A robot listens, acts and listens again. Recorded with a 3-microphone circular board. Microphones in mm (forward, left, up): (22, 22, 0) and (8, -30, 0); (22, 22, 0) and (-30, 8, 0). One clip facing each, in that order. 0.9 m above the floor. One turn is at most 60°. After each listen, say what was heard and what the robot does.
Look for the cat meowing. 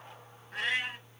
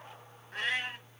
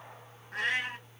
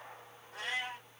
The cat meowing: 10° right. Turn 10° right.
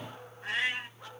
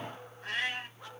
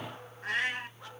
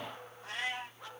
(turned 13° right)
Found it: a cat meowing, straight ahead.